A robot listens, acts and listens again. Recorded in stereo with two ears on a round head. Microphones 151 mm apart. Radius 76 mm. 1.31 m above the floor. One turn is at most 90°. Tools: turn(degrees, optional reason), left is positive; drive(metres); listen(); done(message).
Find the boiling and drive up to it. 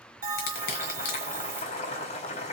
turn(degrees=45, reason="The boiling: about 45° left or 135° left.")
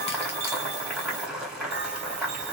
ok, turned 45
drive(metres=1.0)
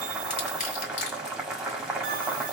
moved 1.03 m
drive(metres=1.0)
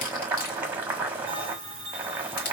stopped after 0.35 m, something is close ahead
turn(degrees=-10, reason="The boiling is now 10° right.")
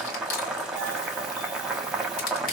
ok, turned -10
done("I am next to the boiling.")